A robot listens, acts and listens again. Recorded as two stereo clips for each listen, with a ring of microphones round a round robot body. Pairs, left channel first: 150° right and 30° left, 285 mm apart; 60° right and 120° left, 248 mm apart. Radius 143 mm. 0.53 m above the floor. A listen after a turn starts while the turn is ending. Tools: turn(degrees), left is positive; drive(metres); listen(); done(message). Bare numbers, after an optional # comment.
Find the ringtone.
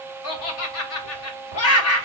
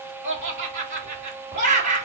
listen()
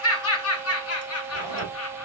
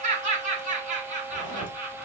listen()
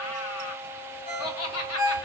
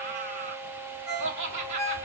# The ringtone: 145° left.
turn(145)
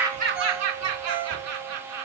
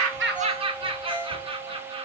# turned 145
# The ringtone is now 20° left.
turn(20)
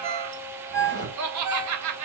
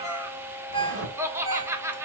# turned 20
# The ringtone is now 10° left.
turn(10)
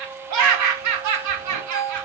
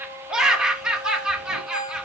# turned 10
done("Found it: a ringtone, straight ahead, 2 to 4 m away.")